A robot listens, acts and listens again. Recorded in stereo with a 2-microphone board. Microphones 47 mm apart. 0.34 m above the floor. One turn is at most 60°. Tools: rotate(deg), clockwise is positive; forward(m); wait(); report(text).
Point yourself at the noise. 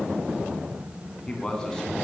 rotate(-15)
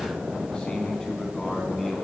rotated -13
rotate(-30)
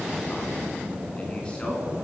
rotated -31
wait()
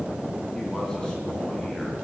wait()
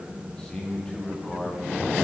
rotate(-15)
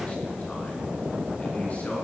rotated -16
wait()
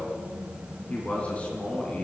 rotate(-30)
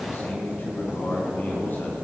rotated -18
rotate(-60)
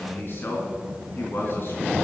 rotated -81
rotate(-45)
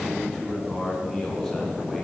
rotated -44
report("Found it: a man speaking, straight ahead, 2 to 4 m away.")